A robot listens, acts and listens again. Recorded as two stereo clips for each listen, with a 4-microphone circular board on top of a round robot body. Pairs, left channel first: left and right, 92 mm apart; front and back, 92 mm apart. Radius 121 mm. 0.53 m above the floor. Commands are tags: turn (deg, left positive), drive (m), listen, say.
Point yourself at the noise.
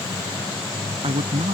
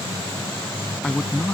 <turn deg="-80"/>
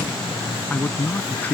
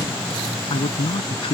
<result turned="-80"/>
<turn deg="20"/>
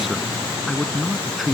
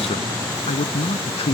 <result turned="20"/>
<say>Found it: a man speaking, straight ahead.</say>